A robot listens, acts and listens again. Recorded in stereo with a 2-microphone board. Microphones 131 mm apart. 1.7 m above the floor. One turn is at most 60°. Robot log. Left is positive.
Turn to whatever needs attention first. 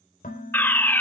cmd yaw +30
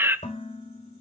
note: So it is at 15° right.
cmd yaw -15
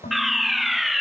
end: Found it: a fire alarm, straight ahead.